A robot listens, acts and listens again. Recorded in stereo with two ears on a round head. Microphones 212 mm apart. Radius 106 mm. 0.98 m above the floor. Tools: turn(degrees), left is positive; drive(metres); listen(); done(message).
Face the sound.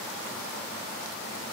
listen()
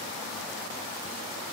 listen()
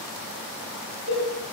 turn(degrees=-55)
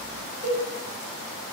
turn(degrees=-35)
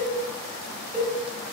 done("Found it: a cowbell, straight ahead, 1 to 2 m away.")